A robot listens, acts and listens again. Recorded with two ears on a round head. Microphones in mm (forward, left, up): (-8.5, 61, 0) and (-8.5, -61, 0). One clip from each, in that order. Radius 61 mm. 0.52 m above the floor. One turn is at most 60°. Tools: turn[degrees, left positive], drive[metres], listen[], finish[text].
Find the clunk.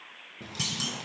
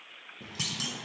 Action: turn[-30]
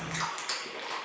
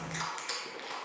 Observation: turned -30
Action: listen[]
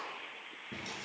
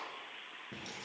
Action: finish[I heard a clunk, but can't make it out now. It was about 25° left or 145° right.]